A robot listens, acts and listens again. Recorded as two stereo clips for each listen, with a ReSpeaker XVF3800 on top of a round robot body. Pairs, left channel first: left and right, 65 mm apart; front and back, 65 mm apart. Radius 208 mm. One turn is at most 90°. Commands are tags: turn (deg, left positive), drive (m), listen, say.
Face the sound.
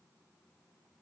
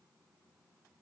<listen/>
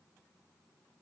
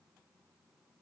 <listen/>
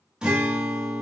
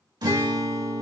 <turn deg="-90"/>
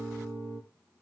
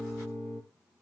<turn deg="-90"/>
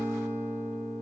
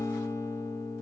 <turn deg="-35"/>
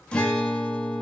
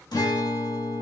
<turn deg="15"/>
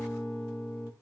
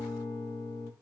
<say>Found it: a guitar, straight ahead.</say>